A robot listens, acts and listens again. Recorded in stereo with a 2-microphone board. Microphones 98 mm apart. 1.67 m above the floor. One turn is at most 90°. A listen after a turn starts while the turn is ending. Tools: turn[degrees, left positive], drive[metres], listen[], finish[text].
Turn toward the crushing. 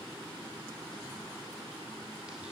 Action: listen[]
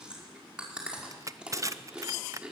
Thought: The crushing: about 35° right or 145° right.
Action: turn[-35]
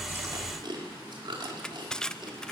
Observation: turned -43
Action: finish[Found it: crushing, straight ahead, under 1 m away.]